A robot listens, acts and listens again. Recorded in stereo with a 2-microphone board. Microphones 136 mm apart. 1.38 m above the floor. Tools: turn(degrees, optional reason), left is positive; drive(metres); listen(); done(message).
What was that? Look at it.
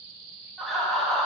turn(degrees=30)
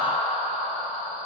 turn(degrees=135, reason="So it is at 135° left.")
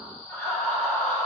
turn(degrees=15, reason="The laughter is now 15° left.")
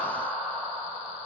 done("Facing the laughter.")